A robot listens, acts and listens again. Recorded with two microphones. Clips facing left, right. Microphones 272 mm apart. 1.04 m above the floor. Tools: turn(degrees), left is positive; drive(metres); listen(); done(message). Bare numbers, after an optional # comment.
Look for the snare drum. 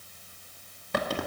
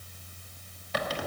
listen()
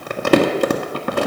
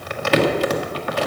listen()
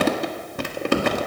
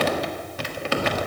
done("I can't make out a snare drum, only crumpling.")